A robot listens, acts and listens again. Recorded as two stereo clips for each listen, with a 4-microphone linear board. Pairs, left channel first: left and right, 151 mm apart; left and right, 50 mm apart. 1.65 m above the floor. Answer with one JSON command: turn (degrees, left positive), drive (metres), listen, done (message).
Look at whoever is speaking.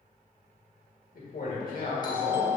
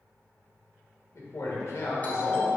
{"turn": 70}
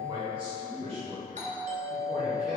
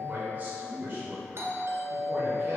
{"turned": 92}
{"turn": -45}
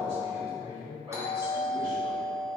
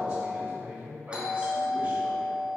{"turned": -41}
{"turn": -30}
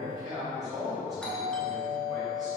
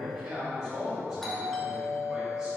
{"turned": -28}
{"done": "Facing the man speaking, 2 to 4 m away."}